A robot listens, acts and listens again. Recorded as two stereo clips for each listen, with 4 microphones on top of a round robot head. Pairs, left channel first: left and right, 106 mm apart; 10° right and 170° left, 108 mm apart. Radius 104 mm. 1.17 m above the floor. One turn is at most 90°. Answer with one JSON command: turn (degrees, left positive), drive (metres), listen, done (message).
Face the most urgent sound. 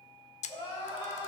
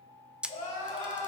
{"turn": -35}
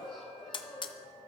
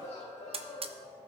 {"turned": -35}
{"turn": 10}
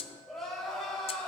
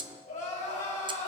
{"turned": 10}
{"done": "Found it: crying, straight ahead, 2 to 4 m away."}